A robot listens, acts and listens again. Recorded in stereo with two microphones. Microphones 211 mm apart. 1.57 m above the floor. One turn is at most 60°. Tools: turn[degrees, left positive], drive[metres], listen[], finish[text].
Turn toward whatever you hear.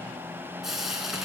Action: turn[30]
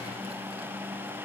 Action: listen[]
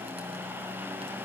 Action: listen[]
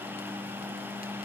Action: finish[I heard frying, but can't make it out now. It was about 30° right or 150° left.]